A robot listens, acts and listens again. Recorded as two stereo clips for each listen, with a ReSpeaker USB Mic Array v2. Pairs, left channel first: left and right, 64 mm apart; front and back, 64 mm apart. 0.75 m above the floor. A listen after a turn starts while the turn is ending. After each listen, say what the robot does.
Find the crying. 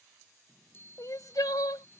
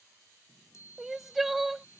Turn 90° left.
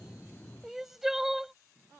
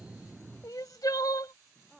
Facing the crying.